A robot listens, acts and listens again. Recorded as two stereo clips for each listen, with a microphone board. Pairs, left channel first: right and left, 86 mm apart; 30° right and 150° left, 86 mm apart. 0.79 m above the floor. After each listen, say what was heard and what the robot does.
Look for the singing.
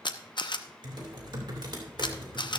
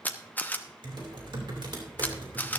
Keep listening.
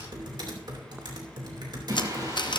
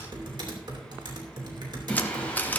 The singing: 45° left. Turn 45° left.
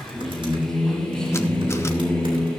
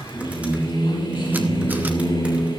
The singing is now 10° right. Turn 10° right.
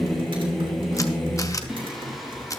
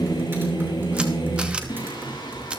Facing the singing, 2 to 4 m away.